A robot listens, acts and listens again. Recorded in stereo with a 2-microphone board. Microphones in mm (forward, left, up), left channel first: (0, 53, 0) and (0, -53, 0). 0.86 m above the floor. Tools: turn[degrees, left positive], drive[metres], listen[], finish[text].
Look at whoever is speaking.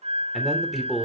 Action: turn[30]
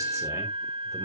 Action: listen[]
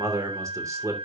Thought: So it is at 30° right.
Action: turn[-30]
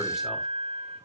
Action: listen[]
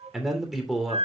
Action: finish[Found it: a man speaking, straight ahead.]